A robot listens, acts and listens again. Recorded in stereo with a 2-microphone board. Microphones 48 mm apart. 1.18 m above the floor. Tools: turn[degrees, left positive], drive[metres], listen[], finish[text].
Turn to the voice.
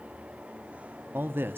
Thought: The man speaking: about 45° right or 135° right.
Action: turn[-45]
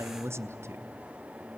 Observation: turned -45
Thought: So it is at 80° right.
Action: turn[-80]
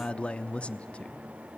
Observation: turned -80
Thought: The man speaking is now 25° left.
Action: turn[25]
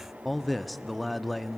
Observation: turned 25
Action: finish[Found it: a man speaking, straight ahead, under 1 m away.]